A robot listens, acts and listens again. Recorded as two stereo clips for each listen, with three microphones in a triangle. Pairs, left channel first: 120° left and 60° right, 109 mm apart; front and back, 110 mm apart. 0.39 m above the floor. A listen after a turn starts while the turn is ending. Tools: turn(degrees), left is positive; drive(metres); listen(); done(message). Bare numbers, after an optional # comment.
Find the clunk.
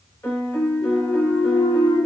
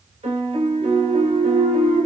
# The clunk: 95° left.
turn(95)
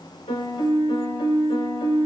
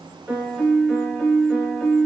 done("I heard a clunk from this way, but can't make it out now.")